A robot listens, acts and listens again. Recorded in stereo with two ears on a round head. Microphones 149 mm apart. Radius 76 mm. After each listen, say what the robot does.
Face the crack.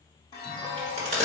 Turn 40° right.
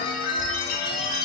Keep listening.
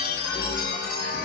I heard a crack, but can't make it out now. It was about straight ahead or 100° right.